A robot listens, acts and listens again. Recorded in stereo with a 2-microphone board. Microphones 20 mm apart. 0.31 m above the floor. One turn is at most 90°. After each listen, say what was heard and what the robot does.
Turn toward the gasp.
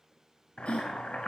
Turn 90° left.
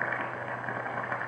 Facing where the gasp came from. I can't hear it now.